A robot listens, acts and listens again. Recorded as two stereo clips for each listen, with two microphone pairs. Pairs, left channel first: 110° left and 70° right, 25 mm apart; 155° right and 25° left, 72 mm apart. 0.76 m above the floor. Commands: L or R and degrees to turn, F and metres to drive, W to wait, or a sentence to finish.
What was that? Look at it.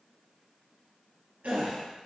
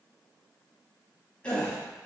R80
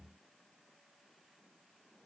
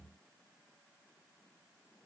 Facing where the gasp came from. I can't hear it now.